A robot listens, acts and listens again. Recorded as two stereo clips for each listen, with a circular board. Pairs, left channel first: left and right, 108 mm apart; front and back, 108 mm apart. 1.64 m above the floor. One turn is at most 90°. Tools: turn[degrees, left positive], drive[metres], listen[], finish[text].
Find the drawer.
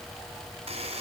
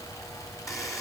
Action: listen[]
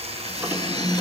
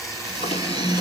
Thought: The drawer: 15° right.
Action: turn[-15]
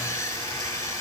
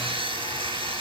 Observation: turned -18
Action: listen[]
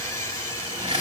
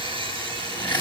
Action: listen[]
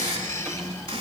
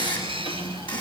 Action: finish[Facing the drawer, 2 to 4 m away.]